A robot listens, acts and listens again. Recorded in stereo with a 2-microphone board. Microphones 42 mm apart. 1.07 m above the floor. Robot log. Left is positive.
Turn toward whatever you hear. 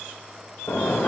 note: The toilet flushing: about 70° left or 110° left.
cmd yaw +70
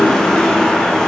note: So it is at 15° left.
cmd yaw +15
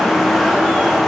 end: Found it: a toilet flushing, straight ahead, 1 to 2 m away.